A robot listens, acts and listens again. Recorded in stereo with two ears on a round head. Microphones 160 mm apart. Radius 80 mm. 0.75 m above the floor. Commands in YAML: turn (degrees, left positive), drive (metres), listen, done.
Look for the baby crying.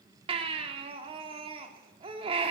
turn: -30
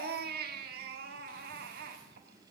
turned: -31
turn: -115
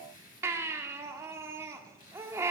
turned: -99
turn: -15
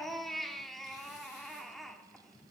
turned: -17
done: "Found it: a baby crying, straight ahead."